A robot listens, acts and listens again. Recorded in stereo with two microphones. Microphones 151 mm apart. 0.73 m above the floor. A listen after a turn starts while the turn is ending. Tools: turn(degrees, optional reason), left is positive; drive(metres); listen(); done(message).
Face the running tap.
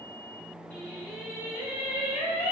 listen()
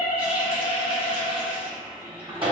turn(degrees=-35, reason="The running tap: about 35° right or 145° right.")
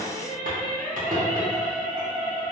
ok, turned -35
turn(degrees=-110, reason="So it is at 110° right.")
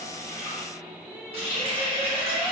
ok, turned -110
turn(degrees=-45, reason="The running tap is now 45° right.")
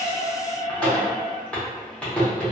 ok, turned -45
turn(degrees=10, reason="The running tap is now 10° left.")
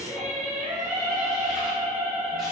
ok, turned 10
listen()
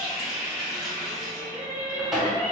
done("Found it: a running tap, straight ahead, under 1 m away.")